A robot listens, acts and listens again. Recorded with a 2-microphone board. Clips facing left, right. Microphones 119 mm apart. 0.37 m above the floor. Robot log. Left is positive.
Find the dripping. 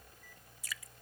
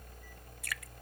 note: The dripping: about 65° right or 115° right.
cmd yaw -65
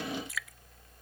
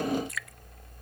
end: Facing the dripping.